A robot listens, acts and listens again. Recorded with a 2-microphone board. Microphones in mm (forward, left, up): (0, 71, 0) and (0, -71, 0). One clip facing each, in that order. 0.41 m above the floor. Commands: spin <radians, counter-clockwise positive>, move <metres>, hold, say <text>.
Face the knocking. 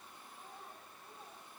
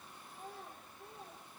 hold
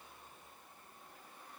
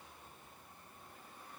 hold
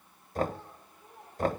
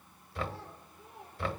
spin 0.79
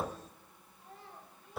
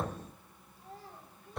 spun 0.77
say Found it: knocking, straight ahead.